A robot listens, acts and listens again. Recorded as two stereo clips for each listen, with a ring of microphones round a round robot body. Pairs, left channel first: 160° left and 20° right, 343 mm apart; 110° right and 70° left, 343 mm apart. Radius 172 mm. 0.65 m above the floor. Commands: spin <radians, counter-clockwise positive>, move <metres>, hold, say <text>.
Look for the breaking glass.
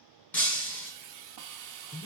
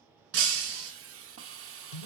spin 1.22
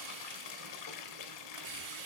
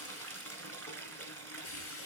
say I heard breaking glass from this way, but can't make it out now.